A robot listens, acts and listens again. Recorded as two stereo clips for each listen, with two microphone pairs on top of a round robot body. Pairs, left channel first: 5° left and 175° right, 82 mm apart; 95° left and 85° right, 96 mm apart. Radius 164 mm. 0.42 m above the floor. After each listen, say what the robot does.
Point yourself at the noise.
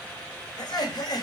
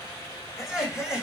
Facing the laughter.